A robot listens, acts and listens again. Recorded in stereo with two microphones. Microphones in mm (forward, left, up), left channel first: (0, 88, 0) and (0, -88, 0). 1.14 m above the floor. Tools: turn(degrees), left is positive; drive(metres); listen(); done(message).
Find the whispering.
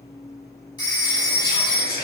turn(degrees=60)
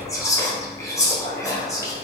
turn(degrees=20)
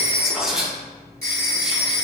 done("Facing the whispering, 1 to 2 m away.")